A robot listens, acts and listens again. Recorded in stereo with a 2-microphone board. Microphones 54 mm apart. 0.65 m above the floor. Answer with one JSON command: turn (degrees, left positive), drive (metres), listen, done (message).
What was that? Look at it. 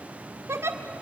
{"turn": -60}
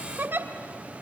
{"turn": -50}
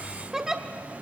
{"turn": -15}
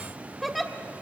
{"done": "Facing the giggle."}